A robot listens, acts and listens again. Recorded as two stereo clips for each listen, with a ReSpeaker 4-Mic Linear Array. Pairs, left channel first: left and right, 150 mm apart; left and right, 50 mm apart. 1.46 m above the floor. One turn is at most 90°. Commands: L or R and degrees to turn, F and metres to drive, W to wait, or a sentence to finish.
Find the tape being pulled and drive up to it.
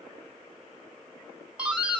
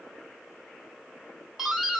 W
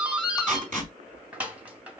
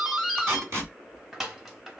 R60
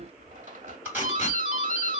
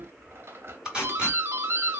R15
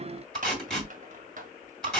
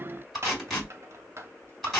F1.0
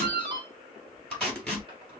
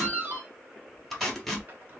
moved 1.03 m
L15
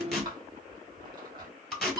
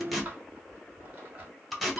F1.0
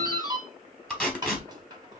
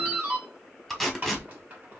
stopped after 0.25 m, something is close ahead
L10
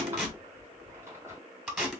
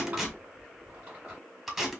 Arrived at the tape being pulled, straight ahead.